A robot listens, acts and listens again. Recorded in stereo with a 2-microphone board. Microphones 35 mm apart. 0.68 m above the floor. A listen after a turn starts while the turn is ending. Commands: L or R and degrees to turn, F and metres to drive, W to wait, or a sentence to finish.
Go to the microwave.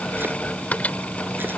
L45
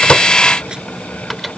W
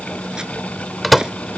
F1.0
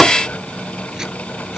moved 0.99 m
F1.0
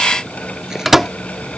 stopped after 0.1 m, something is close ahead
R10
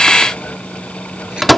Arrived at the microwave, straight ahead.